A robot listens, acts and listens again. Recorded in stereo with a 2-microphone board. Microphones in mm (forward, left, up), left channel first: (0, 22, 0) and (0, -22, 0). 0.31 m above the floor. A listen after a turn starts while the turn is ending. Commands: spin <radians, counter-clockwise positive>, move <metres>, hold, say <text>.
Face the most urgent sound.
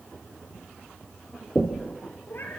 hold
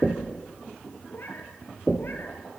hold
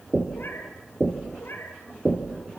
say I can't make out anything urgent, only knocking and a cat meowing.